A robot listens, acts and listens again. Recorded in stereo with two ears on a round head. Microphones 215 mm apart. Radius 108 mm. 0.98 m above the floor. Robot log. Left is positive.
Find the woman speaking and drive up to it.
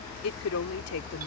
note: The woman speaking: about 70° left or 110° left.
cmd yaw +70
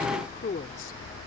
note: So it is at 40° left.
cmd yaw +40
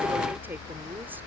cmd idle
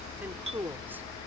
note: The woman speaking is now 10° right.
cmd yaw -10
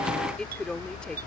cmd fwd 1.0
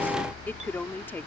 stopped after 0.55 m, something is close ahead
note: The woman speaking is now 10° left.
cmd yaw +10
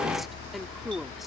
end: Blocked. The woman speaking is further on, straight ahead.